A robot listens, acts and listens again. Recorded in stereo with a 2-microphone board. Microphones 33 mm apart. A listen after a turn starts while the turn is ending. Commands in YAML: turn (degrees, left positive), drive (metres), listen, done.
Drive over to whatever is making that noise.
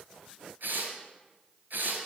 turn: -90
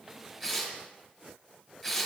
drive: 1.0
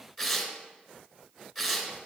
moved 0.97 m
drive: 1.0
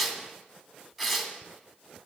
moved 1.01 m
turn: -10
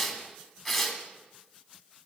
drive: 1.0
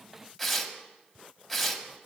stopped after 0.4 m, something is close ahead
done: "I am next to the tearing paper."